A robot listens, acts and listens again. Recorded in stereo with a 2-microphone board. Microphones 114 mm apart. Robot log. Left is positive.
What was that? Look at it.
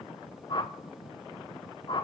note: The whoosh: about 40° left or 140° left.
cmd yaw +40
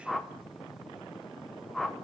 end: Facing the whoosh.